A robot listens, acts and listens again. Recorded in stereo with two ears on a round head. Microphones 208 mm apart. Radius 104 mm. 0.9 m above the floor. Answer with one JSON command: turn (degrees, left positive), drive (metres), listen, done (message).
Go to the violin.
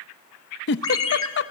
{"listen": true}
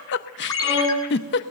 {"turn": 55}
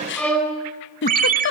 {"drive": 1.0}
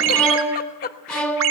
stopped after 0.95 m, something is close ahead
{"done": "Blocked. The violin is further on, straight ahead."}